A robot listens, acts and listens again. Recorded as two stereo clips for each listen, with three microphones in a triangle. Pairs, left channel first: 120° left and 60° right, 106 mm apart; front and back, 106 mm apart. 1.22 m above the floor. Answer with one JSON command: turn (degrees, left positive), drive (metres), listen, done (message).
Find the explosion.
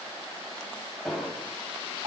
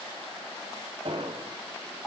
{"turn": -150}
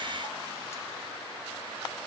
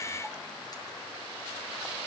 {"done": "Facing where the explosion came from. I can't hear it now."}